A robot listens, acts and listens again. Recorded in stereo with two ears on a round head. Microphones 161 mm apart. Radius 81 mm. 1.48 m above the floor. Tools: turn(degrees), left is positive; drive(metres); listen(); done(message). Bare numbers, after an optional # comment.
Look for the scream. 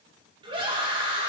# The scream: about 30° right or 150° right.
turn(-30)
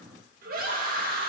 # So it is at 125° right.
turn(-125)
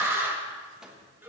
# The scream is now 10° right.
turn(-10)
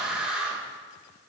done("Found it: a scream, straight ahead.")